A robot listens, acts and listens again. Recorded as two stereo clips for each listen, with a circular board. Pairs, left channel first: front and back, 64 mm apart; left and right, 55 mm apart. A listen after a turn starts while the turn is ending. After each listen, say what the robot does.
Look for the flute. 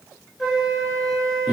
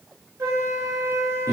Turn 90° right.
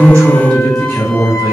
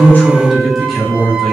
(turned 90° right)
Keep listening.
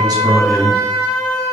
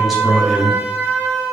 Turn 25° right.
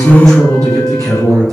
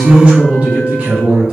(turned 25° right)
Keep listening.
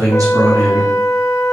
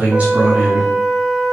Facing the flute.